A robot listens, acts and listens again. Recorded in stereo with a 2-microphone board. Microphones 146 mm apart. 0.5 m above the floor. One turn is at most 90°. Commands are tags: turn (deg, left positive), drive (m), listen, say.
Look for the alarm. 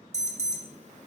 <turn deg="-50"/>
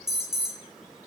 <say>Facing the alarm.</say>